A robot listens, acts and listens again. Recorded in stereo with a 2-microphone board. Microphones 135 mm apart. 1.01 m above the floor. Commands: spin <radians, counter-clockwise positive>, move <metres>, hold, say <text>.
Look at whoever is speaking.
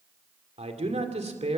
spin -0.87
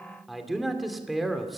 say Facing the man speaking, 2 to 4 m away.